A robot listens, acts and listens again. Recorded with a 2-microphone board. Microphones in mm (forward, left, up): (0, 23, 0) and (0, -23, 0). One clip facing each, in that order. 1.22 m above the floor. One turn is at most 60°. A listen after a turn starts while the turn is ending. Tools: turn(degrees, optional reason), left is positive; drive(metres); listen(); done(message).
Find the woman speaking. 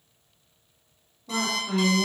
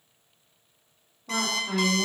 turn(degrees=-35, reason="The woman speaking: about 35° right or 145° right.")
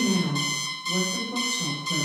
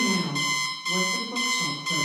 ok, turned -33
turn(degrees=-60, reason="So it is at 110° right.")
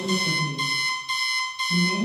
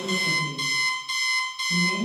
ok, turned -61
turn(degrees=-45, reason="The woman speaking is now 45° right.")
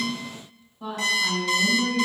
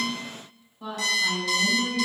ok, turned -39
done("Found it: a woman speaking, straight ahead.")